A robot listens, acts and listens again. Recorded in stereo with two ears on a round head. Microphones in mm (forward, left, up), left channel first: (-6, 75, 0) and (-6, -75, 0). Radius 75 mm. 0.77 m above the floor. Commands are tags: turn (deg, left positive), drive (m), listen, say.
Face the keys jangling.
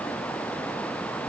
<listen/>
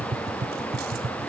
<listen/>
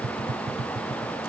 <say>I can't make out keys jangling, only tapping.</say>